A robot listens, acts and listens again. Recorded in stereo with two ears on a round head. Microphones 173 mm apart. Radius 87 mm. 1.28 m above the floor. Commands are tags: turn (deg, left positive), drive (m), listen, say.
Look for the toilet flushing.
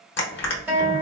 <listen/>
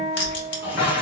<turn deg="25"/>
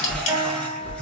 <listen/>
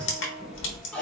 <say>Facing the toilet flushing, under 1 m away.</say>